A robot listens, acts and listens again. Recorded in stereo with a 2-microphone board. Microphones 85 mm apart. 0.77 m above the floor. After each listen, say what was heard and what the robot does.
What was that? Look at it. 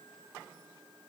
Keep listening.
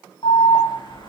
The alarm: about 55° left or 125° left. Turn 55° left.
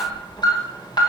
So it is at 60° left. Turn 60° left.
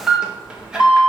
The alarm is now 10° right. Turn 10° right.
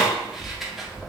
Found it: an alarm, straight ahead, 1 to 2 m away.